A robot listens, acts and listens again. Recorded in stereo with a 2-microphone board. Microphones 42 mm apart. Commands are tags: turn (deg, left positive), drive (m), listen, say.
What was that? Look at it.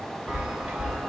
<turn deg="-25"/>
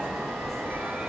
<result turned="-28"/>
<turn deg="-125"/>
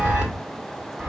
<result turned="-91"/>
<turn deg="-30"/>
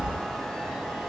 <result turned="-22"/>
<turn deg="-10"/>
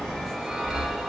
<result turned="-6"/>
<say>Found it: a chime, straight ahead.</say>